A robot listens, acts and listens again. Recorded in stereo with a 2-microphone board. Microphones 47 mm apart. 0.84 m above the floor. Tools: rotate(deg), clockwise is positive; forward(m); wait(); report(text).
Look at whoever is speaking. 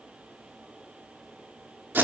wait()
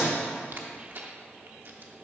wait()
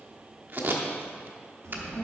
rotate(90)
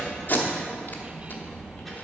report("Facing the child speaking.")